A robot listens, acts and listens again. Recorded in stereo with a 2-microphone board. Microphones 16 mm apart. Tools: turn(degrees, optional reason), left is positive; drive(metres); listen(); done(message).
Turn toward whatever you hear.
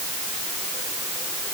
listen()
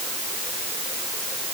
listen()
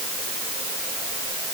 done("I can't make out anything to turn to.")